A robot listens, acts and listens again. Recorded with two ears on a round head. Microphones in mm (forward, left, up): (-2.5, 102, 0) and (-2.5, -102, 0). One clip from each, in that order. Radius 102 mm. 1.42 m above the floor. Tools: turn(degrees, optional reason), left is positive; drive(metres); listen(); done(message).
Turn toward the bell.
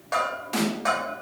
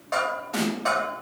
turn(degrees=30)
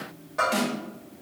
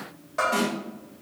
turn(degrees=-15, reason="So it is at 15° right.")
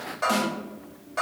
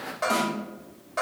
done("Facing the bell, 1 to 2 m away.")